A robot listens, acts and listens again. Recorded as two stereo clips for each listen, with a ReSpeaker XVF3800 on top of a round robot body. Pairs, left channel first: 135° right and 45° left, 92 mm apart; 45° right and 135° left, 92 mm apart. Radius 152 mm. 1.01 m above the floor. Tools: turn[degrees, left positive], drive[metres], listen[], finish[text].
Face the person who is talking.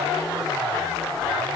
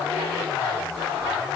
Action: listen[]
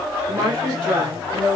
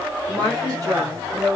Thought: The woman speaking: 85° left.
Action: turn[85]
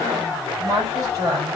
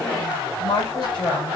Thought: The woman speaking is now 10° right.
Action: turn[-10]
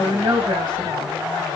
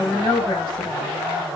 Action: finish[Found it: a woman speaking, straight ahead, 2 to 4 m away.]